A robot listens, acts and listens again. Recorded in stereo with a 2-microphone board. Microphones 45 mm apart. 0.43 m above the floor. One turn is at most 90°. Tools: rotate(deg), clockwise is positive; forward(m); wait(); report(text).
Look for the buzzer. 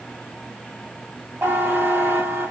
rotate(75)
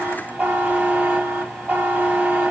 rotate(30)
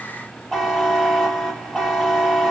rotate(-10)
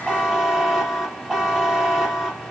report("Facing the buzzer.")